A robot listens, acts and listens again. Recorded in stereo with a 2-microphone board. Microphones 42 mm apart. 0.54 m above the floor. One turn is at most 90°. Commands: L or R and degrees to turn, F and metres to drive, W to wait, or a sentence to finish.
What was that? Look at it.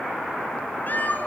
L45
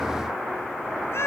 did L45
L85
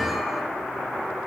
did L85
W
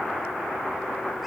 W
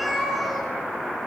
Facing the cat meowing, over 4 m away.